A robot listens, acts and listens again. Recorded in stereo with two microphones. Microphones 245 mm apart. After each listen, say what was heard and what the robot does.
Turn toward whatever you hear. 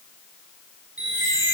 The chime: about 55° right or 125° right. Turn 55° right.
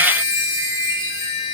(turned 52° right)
So it is at 15° right. Turn 15° right.
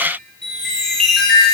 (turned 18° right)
Facing the chime.